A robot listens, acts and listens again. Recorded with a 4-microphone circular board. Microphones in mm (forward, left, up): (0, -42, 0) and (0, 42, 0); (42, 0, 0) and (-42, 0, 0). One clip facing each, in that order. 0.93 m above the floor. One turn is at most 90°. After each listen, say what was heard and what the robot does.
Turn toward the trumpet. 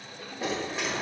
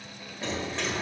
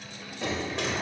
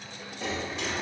Keep listening.
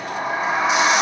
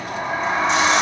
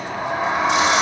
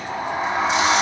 Keep listening.
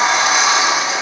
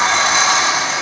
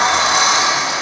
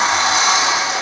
I can't make out a trumpet, only a sliding door.